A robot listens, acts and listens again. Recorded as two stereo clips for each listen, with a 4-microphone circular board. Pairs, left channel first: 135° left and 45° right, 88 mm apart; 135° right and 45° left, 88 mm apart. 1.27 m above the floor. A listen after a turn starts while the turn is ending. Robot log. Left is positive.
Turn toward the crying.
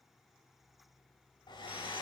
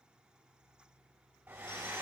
cmd idle
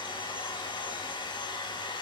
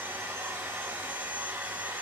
cmd idle
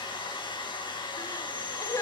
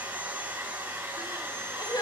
note: The crying: 170° right.
cmd yaw -170
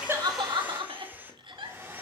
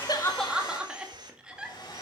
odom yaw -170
note: The crying is now 35° right.
cmd yaw -35
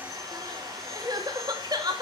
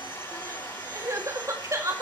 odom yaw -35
note: The crying is now 10° right.
cmd yaw -10
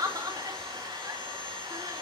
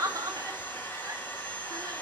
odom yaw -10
end: Facing the crying, 2 to 4 m away.